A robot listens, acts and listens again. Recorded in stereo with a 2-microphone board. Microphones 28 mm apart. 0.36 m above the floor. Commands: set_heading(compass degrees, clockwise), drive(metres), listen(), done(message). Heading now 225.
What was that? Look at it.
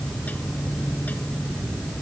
listen()
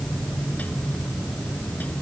listen()
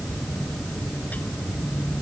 done("I can't make out anything to turn to.")